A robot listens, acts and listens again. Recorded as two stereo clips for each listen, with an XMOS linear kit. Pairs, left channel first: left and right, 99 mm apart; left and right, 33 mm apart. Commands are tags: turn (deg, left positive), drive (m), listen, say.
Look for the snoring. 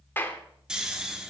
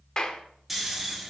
<turn deg="-30"/>
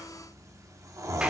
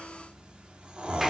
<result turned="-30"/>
<turn deg="-140"/>
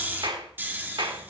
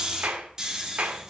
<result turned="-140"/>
<turn deg="-20"/>
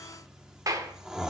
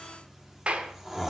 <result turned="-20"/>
<say>Found it: snoring, straight ahead, 1 to 2 m away.</say>